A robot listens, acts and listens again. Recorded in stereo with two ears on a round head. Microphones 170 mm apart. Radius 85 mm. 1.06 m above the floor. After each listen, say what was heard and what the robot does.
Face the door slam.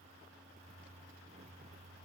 Keep listening.
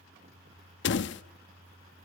The door slam: about 65° left or 115° left. Turn 65° left.
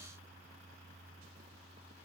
Keep listening.
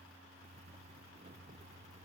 I heard a door slam, but can't make it out now. It was about straight ahead or 50° left.